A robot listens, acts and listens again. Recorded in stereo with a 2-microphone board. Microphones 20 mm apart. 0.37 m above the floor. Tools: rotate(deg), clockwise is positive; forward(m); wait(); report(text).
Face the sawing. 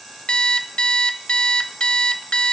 wait()
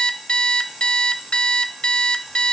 wait()
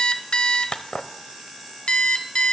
report("I can't make out sawing to turn to.")